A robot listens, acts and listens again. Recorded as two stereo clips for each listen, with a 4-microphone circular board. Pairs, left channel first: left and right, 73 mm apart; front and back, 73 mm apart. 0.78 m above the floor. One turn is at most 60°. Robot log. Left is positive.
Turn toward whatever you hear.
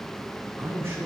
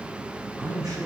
note: The man speaking: 145° right.
cmd yaw -60
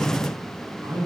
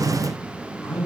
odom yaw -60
note: The man speaking is now 80° right.
cmd yaw -60
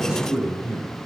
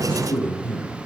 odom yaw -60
note: The man speaking is now 15° right.
cmd yaw -15
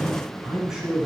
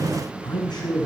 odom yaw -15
end: Facing the man speaking.